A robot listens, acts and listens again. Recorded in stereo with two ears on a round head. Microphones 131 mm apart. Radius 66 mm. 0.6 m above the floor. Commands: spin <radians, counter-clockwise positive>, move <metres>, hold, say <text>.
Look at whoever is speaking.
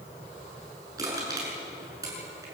hold
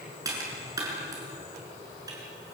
hold
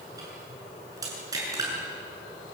say I can't make out anyone speaking, only crushing.